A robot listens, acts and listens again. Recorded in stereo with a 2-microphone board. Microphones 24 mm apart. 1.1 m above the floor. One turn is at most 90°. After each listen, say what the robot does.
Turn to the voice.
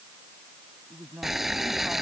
Turn 25° right.
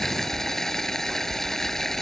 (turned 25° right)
Keep listening.
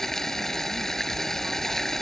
Keep listening.
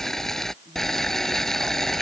I heard a woman speaking, but can't make it out now. It was about straight ahead or 130° right.